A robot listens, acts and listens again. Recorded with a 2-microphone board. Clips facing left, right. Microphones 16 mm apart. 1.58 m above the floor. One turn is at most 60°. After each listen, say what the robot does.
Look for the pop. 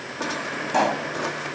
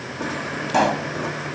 Turn 15° right.
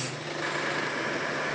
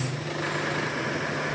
Keep listening.
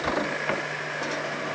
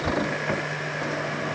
I heard a pop, but can't make it out now. It was about straight ahead or 150° right.